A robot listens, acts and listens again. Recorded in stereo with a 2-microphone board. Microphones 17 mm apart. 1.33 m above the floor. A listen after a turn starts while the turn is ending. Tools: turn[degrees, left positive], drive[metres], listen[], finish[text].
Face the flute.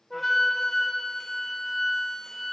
Thought: The flute: about 20° left or 160° left.
Action: turn[20]
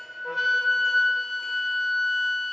Action: finish[Found it: a flute, straight ahead, under 1 m away.]